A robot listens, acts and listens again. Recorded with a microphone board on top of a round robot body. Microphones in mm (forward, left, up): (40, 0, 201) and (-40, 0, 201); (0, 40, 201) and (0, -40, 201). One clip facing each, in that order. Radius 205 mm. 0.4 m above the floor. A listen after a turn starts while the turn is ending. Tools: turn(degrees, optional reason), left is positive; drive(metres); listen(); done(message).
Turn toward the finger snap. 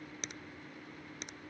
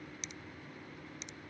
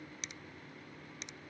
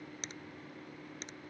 turn(degrees=-40, reason="The finger snap: 40° right.")
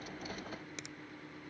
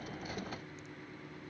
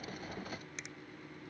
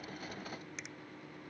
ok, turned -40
listen()
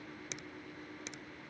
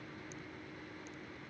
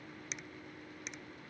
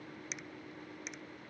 done("Found it: a finger snap, straight ahead.")